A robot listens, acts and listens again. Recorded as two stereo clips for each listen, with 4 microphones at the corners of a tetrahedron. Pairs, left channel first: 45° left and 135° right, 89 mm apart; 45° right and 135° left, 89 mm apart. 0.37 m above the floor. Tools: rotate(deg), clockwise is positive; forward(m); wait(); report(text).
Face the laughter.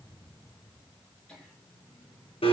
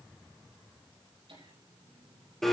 rotate(-125)
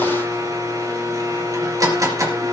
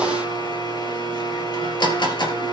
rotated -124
wait()
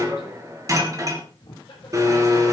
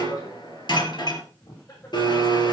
report("Facing the laughter, over 4 m away.")